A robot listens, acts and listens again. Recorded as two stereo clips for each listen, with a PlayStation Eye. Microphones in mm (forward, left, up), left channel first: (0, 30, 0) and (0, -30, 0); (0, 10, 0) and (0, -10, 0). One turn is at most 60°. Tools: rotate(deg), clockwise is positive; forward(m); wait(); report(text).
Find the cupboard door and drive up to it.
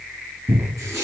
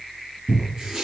rotate(55)
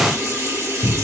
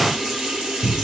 forward(1.0)
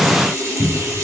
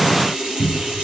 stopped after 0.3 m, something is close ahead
report("Blocked. The cupboard door is further on, straight ahead.")